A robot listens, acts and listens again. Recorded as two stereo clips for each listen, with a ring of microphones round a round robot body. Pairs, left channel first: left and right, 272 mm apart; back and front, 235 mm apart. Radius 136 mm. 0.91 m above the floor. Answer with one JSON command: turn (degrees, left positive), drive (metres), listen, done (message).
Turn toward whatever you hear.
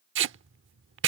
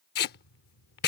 {"turn": -130}
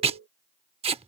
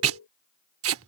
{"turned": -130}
{"turn": -20}
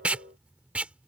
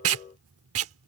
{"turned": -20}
{"done": "Facing the tape being pulled."}